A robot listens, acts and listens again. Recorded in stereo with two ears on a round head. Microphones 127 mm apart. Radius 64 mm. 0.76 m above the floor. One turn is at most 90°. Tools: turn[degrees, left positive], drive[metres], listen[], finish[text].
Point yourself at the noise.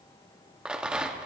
Action: turn[-30]
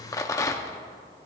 Thought: So it is at 25° left.
Action: turn[25]
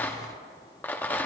Thought: The rattle is now 15° left.
Action: turn[15]
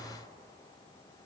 Action: listen[]
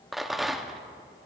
Action: finish[Facing the rattle.]